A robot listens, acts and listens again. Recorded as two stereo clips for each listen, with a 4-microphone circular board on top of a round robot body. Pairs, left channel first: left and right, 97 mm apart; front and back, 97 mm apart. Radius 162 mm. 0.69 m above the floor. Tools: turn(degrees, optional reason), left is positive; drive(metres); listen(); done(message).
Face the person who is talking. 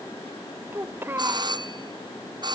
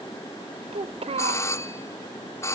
turn(degrees=-160, reason="The child speaking: 160° right.")
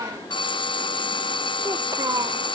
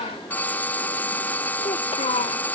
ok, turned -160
turn(degrees=-30, reason="The child speaking is now 30° right.")
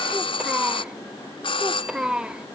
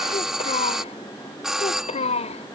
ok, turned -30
turn(degrees=-10, reason="The child speaking is now 10° right.")
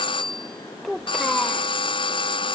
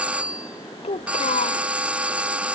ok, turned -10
done("Found it: a child speaking, straight ahead.")